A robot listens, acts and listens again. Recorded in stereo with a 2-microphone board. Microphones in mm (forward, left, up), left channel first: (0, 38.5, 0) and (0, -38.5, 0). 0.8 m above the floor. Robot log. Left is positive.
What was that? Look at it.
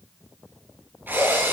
note: The drill: about 25° right or 155° right.
cmd yaw -25
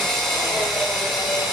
end: Facing the drill.